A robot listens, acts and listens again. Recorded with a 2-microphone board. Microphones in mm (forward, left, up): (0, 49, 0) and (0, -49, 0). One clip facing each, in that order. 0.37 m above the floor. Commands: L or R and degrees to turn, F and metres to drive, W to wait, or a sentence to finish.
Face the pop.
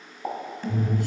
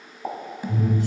L30
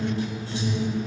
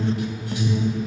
W
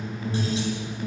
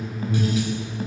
I heard a pop, but can't make it out now. It was about 30° right or 150° left.